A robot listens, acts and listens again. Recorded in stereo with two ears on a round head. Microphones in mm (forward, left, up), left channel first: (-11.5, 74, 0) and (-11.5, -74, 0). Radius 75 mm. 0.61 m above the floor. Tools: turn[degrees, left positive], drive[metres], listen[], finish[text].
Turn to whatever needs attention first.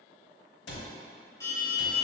Thought: The alarm: about 20° left or 160° left.
Action: turn[20]
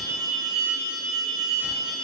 Action: finish[Found it: an alarm, straight ahead, 1 to 2 m away.]